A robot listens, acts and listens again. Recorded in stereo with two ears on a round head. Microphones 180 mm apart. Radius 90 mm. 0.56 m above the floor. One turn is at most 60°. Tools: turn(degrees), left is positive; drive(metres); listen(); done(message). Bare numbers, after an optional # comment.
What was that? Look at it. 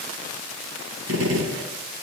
# The gunshot: about 75° right or 105° right.
turn(-60)
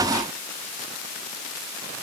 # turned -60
listen()
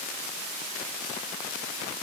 done("I heard a gunshot, but can't make it out now. It was about 15° right or 45° right.")